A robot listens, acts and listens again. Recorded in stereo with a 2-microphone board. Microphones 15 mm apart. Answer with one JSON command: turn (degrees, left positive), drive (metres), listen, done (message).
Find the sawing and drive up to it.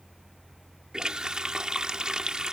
{"listen": true}
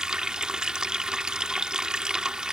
{"listen": true}
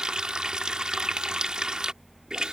{"done": "I can't make out sawing to turn to."}